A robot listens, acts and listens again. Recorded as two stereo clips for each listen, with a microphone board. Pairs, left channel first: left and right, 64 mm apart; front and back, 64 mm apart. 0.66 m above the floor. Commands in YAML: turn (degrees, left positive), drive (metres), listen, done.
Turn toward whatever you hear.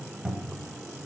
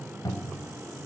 turn: -10
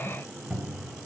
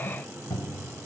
done: "Found it: a cupboard door, straight ahead, 1 to 2 m away."